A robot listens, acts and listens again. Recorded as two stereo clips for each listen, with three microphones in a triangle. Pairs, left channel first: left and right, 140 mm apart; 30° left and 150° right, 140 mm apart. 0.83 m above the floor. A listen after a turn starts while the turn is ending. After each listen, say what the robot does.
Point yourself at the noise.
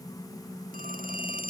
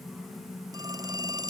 Turn 85° right.
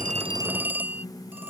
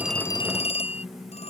Turn 10° right.
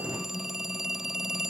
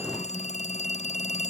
Found it: a phone ringing, straight ahead.